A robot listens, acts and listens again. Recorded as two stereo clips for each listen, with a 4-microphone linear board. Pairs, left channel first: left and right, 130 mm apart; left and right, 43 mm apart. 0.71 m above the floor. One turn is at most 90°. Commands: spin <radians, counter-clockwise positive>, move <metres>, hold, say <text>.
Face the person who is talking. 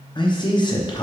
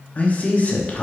spin 0.61
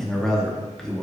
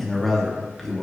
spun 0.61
say Facing the man speaking, under 1 m away.